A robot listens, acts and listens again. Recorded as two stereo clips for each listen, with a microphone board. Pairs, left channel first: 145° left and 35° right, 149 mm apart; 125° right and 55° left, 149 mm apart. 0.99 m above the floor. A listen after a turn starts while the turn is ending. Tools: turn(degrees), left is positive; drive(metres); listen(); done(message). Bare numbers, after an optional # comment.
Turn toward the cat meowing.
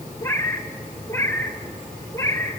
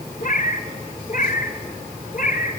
# The cat meowing: 145° right.
turn(-145)
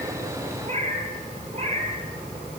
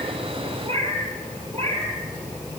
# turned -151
# The cat meowing is now 10° left.
turn(10)
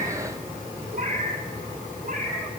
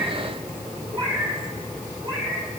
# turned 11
done("Facing the cat meowing, over 4 m away.")